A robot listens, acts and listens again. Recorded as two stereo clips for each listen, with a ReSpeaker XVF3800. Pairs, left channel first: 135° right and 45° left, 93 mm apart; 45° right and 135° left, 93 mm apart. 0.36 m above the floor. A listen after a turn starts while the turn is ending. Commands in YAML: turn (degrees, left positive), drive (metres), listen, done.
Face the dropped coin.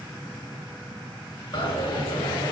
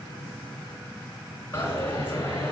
turn: -110
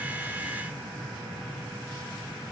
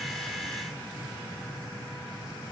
done: "I heard a dropped coin from this way, but can't make it out now."